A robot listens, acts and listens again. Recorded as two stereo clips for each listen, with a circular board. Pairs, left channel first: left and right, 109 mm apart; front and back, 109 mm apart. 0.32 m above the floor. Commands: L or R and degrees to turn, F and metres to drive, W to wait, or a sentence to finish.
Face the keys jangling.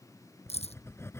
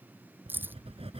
L110
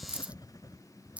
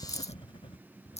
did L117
R10
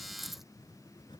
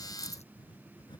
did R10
W
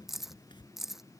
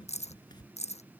Facing the keys jangling.